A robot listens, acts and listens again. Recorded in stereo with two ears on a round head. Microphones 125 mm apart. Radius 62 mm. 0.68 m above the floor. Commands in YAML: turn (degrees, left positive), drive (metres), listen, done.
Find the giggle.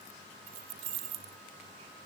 listen: true
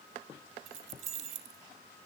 listen: true
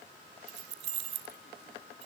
done: "I can't make out a giggle to turn to."